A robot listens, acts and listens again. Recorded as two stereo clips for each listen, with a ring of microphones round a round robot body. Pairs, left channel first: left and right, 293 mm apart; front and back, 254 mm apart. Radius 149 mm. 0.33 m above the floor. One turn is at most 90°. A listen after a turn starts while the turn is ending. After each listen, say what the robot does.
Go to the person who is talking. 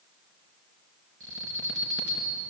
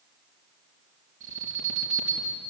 Keep listening.
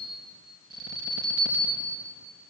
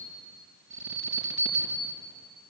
Keep listening.
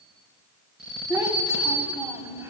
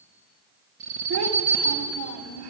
Turn 90° right.
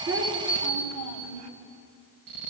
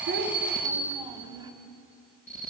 Turn 90° right.
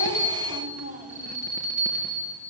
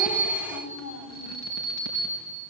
Turn 30° right.
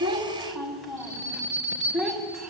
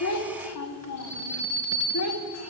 Drive 1.0 m forward.
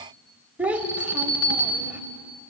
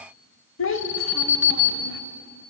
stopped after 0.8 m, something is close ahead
Arrived at the child speaking, straight ahead.